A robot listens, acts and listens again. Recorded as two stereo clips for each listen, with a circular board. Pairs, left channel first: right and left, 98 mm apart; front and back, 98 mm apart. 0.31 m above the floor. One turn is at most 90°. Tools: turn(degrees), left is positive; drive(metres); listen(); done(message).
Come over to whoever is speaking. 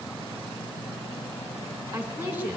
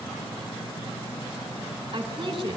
turn(degrees=90)
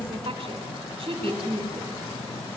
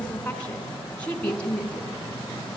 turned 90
turn(degrees=75)
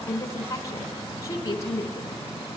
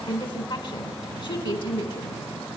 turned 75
turn(degrees=-35)
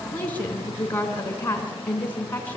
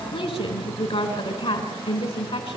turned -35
turn(degrees=-20)
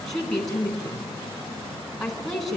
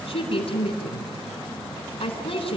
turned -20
drive(metres=1.0)
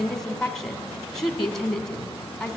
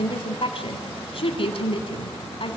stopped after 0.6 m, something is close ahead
done("Something is in my way. I am facing the woman speaking but have not reached it.")